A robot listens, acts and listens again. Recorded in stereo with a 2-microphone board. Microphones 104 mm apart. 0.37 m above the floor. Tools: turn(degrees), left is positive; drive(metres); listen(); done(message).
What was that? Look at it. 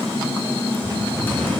turn(degrees=20)
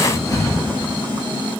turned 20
turn(degrees=140)
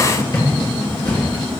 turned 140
turn(degrees=40)
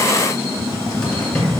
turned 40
turn(degrees=10)
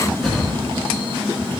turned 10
done("Facing the cupboard door.")